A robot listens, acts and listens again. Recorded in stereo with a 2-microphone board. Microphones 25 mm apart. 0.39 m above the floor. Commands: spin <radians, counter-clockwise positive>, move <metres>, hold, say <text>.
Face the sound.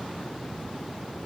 hold
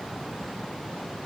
hold
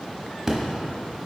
spin -0.35
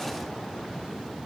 hold
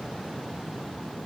say I heard an explosion, but can't make it out now. It was about straight ahead or 140° right.